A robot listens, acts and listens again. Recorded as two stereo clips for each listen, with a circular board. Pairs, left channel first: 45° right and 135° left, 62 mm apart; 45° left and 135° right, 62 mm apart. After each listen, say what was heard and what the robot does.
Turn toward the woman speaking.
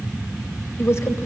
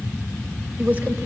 The woman speaking: 75° right. Turn 75° right.
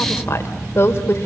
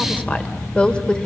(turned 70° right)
The woman speaking is now 25° right. Turn 25° right.
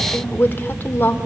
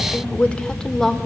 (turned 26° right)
The woman speaking is now 35° right. Turn 35° right.
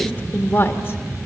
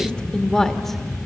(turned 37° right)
The woman speaking is now 35° right. Turn 35° right.
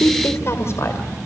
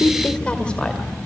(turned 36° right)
The woman speaking is now 30° right. Turn 30° right.
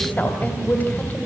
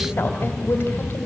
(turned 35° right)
Facing the woman speaking, 2 to 4 m away.